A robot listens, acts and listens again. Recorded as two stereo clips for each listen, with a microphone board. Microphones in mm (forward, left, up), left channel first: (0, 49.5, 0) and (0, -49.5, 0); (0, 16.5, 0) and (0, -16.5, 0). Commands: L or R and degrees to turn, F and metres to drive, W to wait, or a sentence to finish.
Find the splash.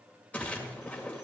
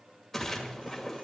L15
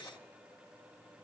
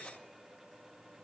W
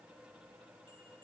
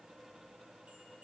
I heard a splash, but can't make it out now. It was about straight ahead or 150° left.